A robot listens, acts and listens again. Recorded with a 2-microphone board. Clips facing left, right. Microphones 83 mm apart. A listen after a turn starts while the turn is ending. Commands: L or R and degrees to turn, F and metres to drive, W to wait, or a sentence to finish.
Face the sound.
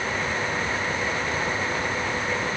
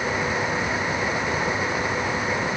W
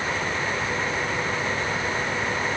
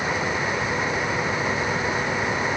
W
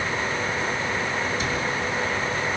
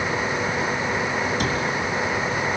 R65
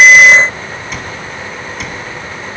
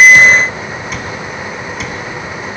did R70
Found it: a cupboard door, straight ahead.